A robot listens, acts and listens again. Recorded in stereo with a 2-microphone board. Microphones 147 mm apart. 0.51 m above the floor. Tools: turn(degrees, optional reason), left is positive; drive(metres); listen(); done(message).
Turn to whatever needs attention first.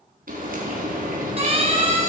turn(degrees=-45, reason="The siren: about 45° right or 135° right.")
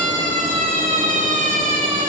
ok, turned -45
turn(degrees=-85, reason="So it is at 85° right.")
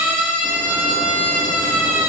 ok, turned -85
turn(degrees=-15, reason="The siren is now 15° right.")
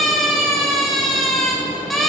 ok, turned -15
done("Found it: a siren, straight ahead.")